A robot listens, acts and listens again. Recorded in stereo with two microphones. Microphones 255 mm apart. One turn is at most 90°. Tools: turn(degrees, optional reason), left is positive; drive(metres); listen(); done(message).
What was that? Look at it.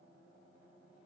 listen()
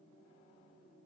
listen()
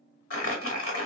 turn(degrees=60, reason="The crumpling: about 60° left or 120° left.")
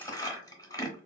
turn(degrees=15, reason="So it is at 15° left.")
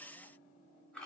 listen()
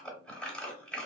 done("Facing the crumpling, under 1 m away.")